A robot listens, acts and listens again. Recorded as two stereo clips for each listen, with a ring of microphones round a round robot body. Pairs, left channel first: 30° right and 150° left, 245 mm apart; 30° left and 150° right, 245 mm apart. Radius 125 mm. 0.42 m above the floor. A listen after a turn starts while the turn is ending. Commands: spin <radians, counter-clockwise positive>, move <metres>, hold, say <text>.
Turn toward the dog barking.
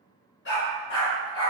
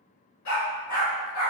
say Facing the dog barking, 1 to 2 m away.